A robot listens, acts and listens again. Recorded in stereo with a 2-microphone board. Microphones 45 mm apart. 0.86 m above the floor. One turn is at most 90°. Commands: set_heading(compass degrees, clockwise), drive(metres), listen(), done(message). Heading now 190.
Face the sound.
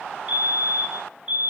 set_heading(215)
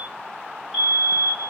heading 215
done("Facing the fire alarm.")